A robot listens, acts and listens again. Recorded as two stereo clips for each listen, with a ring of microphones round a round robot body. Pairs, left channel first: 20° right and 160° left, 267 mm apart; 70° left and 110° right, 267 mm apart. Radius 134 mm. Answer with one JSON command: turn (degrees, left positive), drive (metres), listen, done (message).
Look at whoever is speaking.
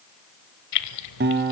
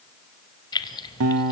{"listen": true}
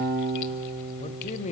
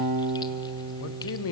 {"turn": 40}
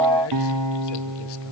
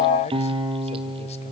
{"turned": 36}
{"listen": true}
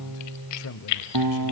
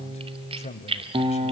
{"done": "Facing the man speaking, 1 to 2 m away."}